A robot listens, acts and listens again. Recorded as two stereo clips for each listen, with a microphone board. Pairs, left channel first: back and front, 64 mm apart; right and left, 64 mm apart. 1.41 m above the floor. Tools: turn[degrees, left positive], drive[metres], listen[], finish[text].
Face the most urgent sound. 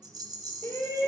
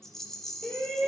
Thought: The shout: 170° right.
Action: turn[-170]
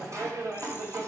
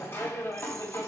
Thought: The shout is now 35° right.
Action: turn[-35]
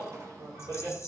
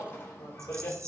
Thought: The shout is now 30° right.
Action: turn[-30]
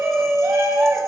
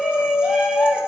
Action: finish[Found it: a shout, straight ahead, 2 to 4 m away.]